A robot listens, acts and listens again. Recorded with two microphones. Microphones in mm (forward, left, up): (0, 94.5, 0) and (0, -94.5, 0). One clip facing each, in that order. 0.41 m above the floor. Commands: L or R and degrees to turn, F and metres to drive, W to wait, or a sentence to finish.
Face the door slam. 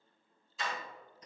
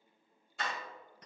R65
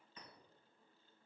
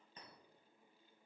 W
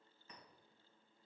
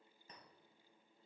I heard a door slam, but can't make it out now. It was about straight ahead or 50° right.